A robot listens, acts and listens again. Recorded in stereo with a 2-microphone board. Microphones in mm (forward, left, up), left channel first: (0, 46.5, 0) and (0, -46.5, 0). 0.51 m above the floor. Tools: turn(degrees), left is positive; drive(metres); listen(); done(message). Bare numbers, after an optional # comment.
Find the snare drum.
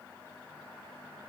listen()
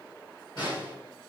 # The snare drum: about 55° left or 125° left.
turn(55)
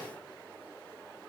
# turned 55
listen()
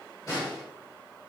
# So it is at 55° left.
turn(55)
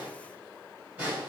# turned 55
# The snare drum is now 15° right.
turn(-15)
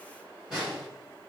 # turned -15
done("Facing the snare drum, 2 to 4 m away.")